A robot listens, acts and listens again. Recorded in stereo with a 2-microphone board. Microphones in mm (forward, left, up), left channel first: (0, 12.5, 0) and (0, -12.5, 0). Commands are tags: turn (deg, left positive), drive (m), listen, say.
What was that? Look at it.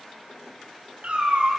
<turn deg="-75"/>
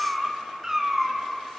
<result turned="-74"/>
<turn deg="-25"/>
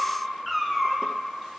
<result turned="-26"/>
<say>Facing the cat meowing, 2 to 4 m away.</say>